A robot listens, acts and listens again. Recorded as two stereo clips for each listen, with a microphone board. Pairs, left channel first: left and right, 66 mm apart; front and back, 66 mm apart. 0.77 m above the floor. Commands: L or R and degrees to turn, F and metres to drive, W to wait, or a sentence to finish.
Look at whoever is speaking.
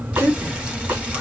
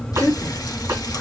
R55
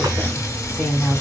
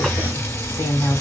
Facing the woman speaking, 2 to 4 m away.